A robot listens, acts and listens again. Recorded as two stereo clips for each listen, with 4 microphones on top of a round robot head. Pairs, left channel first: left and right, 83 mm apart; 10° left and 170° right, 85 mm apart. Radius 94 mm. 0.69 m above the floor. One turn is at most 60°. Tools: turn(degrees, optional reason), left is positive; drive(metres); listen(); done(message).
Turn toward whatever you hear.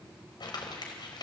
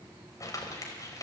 turn(degrees=60, reason="The crumpling: 60° left.")
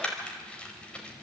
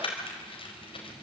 turn(degrees=10, reason="The crumpling is now 10° left.")
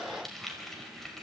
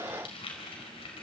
done("Found it: crumpling, straight ahead, over 4 m away.")